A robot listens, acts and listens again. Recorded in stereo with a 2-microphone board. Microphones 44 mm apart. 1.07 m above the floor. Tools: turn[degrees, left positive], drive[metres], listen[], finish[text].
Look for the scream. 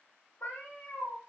Action: listen[]
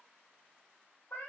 Action: listen[]
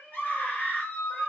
Thought: The scream: about 50° left or 130° left.
Action: turn[50]
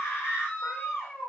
Thought: So it is at 75° left.
Action: turn[75]
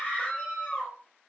Thought: The scream is now 35° left.
Action: turn[35]
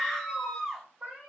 Thought: The scream is now 10° left.
Action: turn[10]
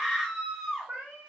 Action: finish[Found it: a scream, straight ahead.]